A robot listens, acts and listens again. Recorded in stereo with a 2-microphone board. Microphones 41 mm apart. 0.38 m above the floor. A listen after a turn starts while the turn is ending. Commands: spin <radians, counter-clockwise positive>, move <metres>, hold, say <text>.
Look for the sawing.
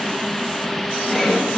spin 0.52
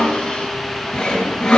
spin 2.62
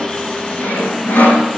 spin 0.79
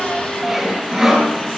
spin -0.17
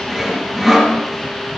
say Facing the sawing.